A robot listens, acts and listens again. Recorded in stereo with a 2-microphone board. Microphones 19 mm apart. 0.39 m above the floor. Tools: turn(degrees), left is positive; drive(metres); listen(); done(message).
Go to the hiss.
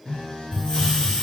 turn(degrees=45)
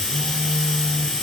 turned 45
turn(degrees=85)
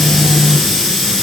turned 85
drive(metres=1.0)
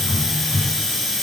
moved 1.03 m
drive(metres=1.0)
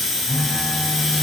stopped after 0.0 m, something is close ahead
done("I am next to the hiss.")